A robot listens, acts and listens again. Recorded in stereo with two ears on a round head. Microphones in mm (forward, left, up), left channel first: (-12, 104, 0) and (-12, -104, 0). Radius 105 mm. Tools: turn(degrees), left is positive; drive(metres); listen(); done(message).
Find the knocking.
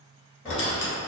turn(degrees=30)
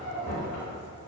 turn(degrees=140)
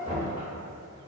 turn(degrees=25)
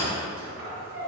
listen()
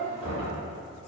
turn(degrees=-15)
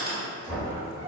done("Facing the knocking, 1 to 2 m away.")